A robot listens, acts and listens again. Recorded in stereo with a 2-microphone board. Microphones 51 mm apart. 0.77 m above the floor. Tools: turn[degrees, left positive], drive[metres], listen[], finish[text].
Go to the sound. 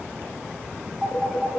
Thought: The phone ringing: about 20° right or 160° right.
Action: turn[-20]
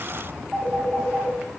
Action: drive[1.0]
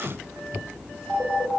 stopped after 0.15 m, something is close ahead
Action: finish[Something is in my way. I am facing the phone ringing but have not reached it.]